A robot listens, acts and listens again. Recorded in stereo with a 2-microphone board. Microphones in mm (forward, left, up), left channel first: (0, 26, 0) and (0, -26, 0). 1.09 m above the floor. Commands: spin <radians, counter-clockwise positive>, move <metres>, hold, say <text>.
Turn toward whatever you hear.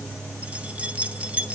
spin -0.44
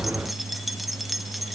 say Found it: keys jangling, straight ahead, under 1 m away.